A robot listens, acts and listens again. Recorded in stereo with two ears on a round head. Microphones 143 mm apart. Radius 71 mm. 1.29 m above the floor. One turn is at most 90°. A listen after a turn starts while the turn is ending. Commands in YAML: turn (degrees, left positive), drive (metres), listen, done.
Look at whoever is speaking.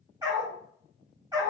listen: true
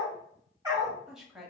turn: -30
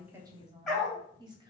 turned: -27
turn: -90
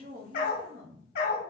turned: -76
turn: -70
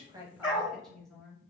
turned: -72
done: "Found it: a woman speaking, straight ahead."